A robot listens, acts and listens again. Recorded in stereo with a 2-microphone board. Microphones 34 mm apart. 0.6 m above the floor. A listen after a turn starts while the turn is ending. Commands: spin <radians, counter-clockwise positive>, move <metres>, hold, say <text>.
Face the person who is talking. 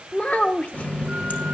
spin 0.87
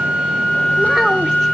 hold
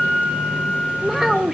say Found it: a child speaking, straight ahead.